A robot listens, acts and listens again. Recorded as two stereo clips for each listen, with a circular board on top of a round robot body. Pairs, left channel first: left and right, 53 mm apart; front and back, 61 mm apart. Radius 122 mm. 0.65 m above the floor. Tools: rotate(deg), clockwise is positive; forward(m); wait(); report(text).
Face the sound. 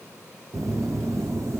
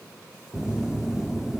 rotate(100)
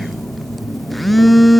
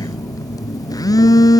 report("Facing the phone buzzing.")